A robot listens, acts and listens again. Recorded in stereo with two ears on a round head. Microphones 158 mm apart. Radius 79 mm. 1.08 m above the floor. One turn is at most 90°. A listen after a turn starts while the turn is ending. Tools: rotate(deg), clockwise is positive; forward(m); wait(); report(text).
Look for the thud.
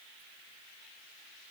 wait()
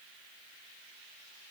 wait()
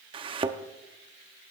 rotate(30)
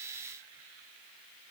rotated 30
wait()
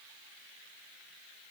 report("I heard a thud, but can't make it out now. It was about straight ahead or 120° right.")